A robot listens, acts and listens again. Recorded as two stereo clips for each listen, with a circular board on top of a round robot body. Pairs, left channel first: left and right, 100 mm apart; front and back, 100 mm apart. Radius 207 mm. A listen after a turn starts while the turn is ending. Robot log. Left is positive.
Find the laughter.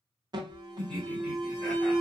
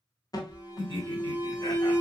end: Found it: laughter, straight ahead.